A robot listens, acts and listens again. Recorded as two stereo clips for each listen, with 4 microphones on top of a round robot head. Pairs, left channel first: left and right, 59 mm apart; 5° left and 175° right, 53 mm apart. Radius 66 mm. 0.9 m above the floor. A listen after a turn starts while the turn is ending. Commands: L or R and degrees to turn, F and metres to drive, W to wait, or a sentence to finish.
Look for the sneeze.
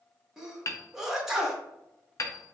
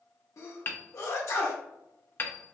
R10
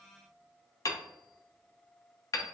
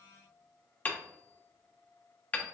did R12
Facing where the sneeze came from. I can't hear it now.